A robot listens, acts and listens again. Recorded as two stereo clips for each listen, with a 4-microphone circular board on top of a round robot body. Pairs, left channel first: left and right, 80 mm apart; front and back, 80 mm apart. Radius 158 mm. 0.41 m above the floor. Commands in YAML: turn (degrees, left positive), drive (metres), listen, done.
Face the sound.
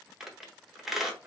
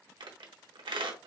turn: -175
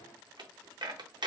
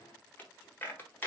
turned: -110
turn: -65
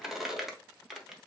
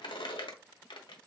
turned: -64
done: "Facing the squeak."